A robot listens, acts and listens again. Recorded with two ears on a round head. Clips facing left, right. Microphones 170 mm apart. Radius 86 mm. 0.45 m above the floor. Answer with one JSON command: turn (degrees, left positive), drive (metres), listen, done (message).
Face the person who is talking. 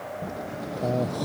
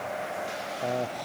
{"turn": 20}
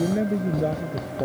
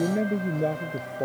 {"done": "Facing the man speaking."}